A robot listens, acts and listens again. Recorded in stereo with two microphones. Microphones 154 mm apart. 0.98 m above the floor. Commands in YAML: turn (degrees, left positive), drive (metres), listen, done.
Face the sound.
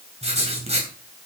turn: -45
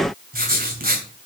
turn: -90
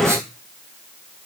listen: true
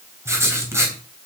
turn: -20
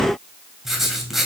done: "Facing the writing."